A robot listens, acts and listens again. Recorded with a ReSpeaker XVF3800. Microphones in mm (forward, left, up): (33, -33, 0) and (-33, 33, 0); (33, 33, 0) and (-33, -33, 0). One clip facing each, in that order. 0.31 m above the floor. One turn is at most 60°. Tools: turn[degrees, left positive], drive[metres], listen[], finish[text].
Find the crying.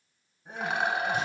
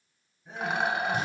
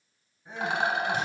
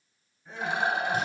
Thought: The crying: 25° right.
Action: turn[-25]
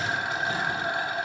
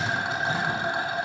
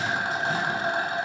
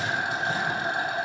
Action: listen[]
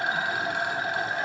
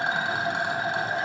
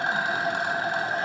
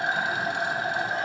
Action: listen[]
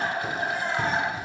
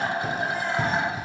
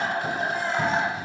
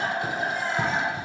Action: finish[I heard crying from this way, but can't make it out now.]